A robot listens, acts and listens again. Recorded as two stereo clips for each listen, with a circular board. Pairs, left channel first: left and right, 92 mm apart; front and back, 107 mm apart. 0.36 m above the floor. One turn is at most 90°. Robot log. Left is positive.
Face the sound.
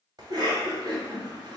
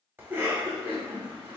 note: The cough: 115° right.
cmd yaw -90
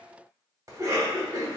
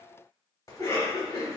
note: The cough is now 50° right.
cmd yaw -50
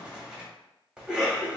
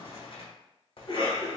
note: The cough is now 10° right.
cmd yaw -10
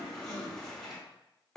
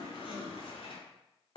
end: Found it: a cough, straight ahead, 1 to 2 m away.